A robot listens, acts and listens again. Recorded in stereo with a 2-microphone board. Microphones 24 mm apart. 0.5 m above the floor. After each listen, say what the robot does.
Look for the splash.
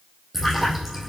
Turn 30° right.
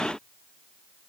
Keep listening.
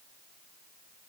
I heard a splash, but can't make it out now. It was about 25° left or 145° right.